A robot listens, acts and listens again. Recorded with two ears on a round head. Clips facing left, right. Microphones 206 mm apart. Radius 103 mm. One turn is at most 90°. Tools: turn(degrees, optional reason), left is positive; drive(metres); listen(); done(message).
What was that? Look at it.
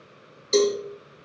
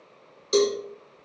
turn(degrees=-20, reason="The cowbell: about 20° right or 160° right.")
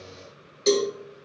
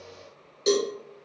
done("Facing the cowbell.")